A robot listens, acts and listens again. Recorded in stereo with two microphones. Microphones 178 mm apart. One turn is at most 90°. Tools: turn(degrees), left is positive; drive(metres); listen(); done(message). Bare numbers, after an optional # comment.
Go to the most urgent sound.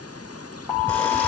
turn(30)
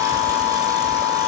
# So it is at 145° left.
turn(90)
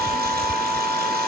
# The alarm is now 40° left.
turn(40)
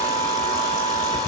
drive(1.0)
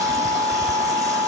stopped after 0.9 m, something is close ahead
done("I am next to the alarm.")